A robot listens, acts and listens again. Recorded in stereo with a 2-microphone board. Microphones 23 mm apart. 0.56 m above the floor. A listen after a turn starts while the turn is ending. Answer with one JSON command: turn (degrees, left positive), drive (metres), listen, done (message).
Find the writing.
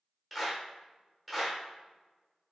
{"listen": true}
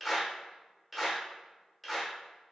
{"listen": true}
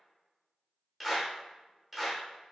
{"done": "I can't make out writing, only a clap."}